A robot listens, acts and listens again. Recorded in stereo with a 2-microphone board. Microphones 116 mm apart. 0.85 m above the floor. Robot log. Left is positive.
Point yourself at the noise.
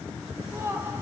note: The laughter: about 20° right or 160° right.
cmd yaw -20
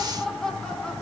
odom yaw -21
end: Found it: laughter, straight ahead, 2 to 4 m away.